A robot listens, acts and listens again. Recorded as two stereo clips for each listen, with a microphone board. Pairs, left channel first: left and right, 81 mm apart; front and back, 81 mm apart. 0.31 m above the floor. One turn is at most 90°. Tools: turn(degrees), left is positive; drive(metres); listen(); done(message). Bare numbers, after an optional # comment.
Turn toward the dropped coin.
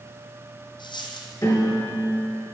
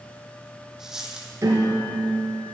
# The dropped coin: 95° left.
turn(90)
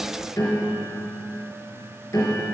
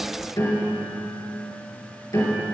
done("I heard a dropped coin from this way, but can't make it out now.")